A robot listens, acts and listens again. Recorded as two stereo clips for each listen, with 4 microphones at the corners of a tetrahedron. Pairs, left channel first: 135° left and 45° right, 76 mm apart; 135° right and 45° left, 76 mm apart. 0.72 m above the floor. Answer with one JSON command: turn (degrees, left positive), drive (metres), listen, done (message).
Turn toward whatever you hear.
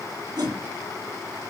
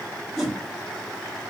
{"turn": -40}
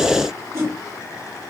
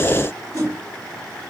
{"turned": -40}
{"done": "Found it: a whoosh, straight ahead, 1 to 2 m away."}